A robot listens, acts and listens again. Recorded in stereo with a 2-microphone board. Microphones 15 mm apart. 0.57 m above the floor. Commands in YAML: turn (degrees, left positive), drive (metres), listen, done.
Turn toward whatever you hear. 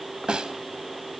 turn: -90
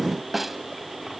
turn: -10
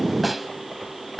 done: "Found it: a snare drum, straight ahead, 1 to 2 m away."